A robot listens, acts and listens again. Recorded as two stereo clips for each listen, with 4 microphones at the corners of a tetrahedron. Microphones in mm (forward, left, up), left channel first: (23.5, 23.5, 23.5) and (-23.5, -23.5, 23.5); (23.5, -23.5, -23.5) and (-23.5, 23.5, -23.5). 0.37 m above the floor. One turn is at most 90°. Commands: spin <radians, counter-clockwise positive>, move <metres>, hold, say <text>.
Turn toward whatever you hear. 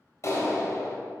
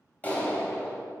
spin 0.26
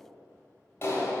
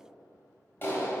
say Found it: a clap, straight ahead, 1 to 2 m away.